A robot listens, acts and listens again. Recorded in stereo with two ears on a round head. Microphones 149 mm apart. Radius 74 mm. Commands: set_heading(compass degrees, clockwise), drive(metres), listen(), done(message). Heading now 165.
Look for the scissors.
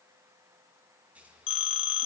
set_heading(195)
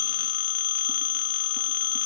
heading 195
listen()
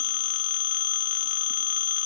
listen()
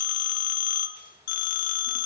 done("I heard scissors, but can't make it out now. It was about 20° left or 140° right.")